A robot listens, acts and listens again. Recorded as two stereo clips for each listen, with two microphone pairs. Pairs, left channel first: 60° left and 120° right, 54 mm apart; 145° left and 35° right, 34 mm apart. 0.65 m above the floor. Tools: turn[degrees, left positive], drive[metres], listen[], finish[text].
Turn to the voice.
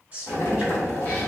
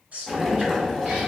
Thought: The woman speaking: 60° right.
Action: turn[-60]
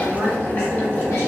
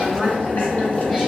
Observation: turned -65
Action: finish[Found it: a woman speaking, straight ahead.]